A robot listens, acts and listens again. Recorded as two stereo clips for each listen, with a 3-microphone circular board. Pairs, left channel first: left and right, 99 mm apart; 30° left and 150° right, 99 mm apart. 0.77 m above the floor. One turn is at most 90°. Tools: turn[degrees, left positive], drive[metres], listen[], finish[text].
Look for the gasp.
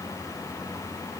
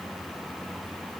Action: listen[]
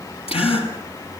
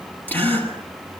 Thought: The gasp: 100° left.
Action: turn[90]
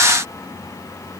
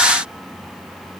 Thought: Nothing new. It was at 10° left.
Action: turn[10]
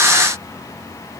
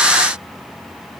Action: finish[I heard a gasp from this way, but can't make it out now.]